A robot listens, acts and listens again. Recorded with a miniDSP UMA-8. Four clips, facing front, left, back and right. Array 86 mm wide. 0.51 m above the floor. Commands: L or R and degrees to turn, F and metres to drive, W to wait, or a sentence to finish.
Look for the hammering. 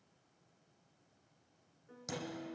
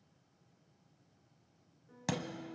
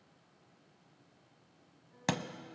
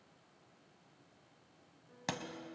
R175
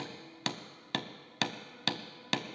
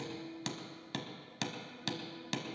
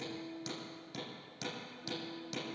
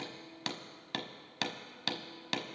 R20
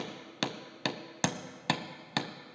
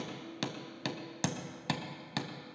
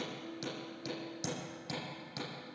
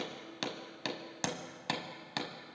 Found it: hammering, straight ahead, 1 to 2 m away.